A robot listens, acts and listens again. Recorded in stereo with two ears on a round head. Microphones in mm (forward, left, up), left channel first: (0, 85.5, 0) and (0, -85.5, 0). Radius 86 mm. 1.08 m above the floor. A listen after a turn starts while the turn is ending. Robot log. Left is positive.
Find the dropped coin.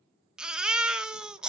cmd idle
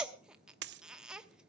note: The dropped coin: about 60° right or 120° right.
cmd yaw -60
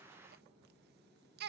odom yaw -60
cmd idle
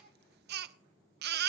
end: I heard a dropped coin, but can't make it out now. It was about straight ahead or 60° right.